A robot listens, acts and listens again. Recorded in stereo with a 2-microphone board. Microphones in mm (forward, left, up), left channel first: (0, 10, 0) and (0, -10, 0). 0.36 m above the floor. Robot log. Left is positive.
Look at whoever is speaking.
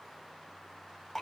cmd idle
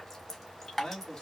note: The man speaking: about 50° left or 130° left.
cmd yaw +50
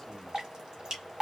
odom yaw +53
cmd idle
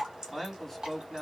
end: Found it: a man speaking, straight ahead, 2 to 4 m away.